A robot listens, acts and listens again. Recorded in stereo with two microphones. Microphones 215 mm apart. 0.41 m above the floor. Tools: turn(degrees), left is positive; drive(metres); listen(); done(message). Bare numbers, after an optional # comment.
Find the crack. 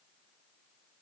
listen()
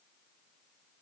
listen()
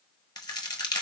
# The crack: about 20° left or 160° left.
turn(20)
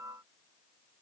listen()
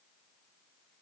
done("I heard a crack, but can't make it out now. It was about straight ahead or 140° left.")